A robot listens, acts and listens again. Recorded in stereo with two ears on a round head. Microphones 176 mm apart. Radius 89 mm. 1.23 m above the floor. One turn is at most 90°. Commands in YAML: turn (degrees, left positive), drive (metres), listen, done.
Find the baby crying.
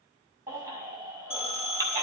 turn: -20
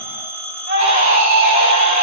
turn: -90
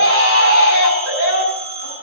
turn: -70
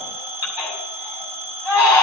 turn: -10
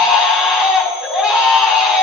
done: "Found it: a baby crying, straight ahead."